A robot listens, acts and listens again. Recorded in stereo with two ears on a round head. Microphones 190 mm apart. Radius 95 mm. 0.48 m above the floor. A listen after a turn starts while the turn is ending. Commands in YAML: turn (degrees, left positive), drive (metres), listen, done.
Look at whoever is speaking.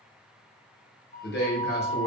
turn: 55
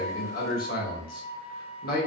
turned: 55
turn: 55
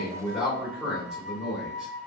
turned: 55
done: "Facing the man speaking, 1 to 2 m away."